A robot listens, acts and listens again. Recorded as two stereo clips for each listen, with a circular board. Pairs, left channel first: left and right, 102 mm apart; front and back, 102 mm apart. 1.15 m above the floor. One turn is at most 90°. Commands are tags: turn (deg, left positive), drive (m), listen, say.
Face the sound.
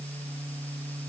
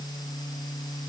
<listen/>
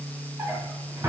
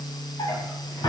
<turn deg="-35"/>
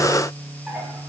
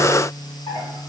<listen/>
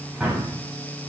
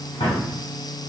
<turn deg="-10"/>
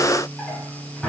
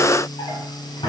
<say>Found it: a drawer, straight ahead, 1 to 2 m away.</say>